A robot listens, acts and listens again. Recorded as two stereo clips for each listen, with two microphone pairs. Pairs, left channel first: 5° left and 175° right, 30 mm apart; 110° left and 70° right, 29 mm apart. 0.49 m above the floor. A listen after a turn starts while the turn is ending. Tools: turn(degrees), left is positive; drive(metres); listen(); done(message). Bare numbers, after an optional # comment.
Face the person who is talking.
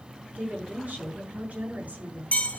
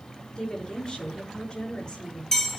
# The woman speaking: 160° left.
turn(160)
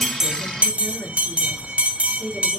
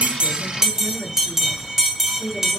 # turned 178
# The woman speaking is now 15° right.
turn(-15)
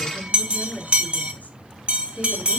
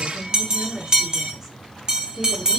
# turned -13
done("Found it: a woman speaking, straight ahead.")